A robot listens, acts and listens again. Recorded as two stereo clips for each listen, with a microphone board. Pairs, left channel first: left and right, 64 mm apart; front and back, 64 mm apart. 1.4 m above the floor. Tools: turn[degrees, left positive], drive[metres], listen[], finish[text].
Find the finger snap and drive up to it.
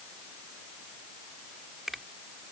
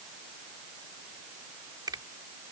Thought: The finger snap: 175° right.
Action: turn[-175]
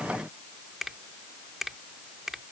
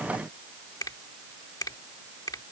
Action: drive[1.0]
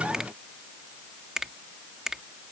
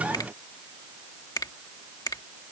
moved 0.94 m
Action: drive[1.0]
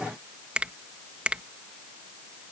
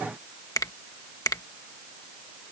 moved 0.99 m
Thought: The finger snap is now 15° right.
Action: turn[-15]
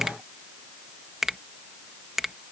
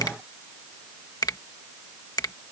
Action: drive[1.0]
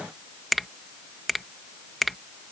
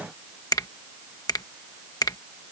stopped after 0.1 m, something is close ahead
Action: finish[I am next to the finger snap.]